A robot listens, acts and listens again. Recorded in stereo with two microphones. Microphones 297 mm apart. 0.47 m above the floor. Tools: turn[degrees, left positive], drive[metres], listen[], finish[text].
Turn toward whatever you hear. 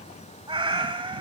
Thought: The cat meowing: about 20° right or 160° right.
Action: turn[-20]
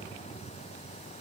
Action: listen[]
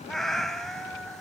Action: finish[Found it: a cat meowing, straight ahead.]